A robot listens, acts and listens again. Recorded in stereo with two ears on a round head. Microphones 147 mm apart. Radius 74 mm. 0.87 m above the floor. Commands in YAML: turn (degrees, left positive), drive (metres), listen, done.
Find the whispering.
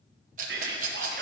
turn: -65
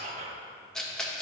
turn: -40
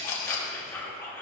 turn: 15
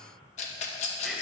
listen: true
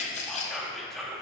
done: "Found it: whispering, straight ahead."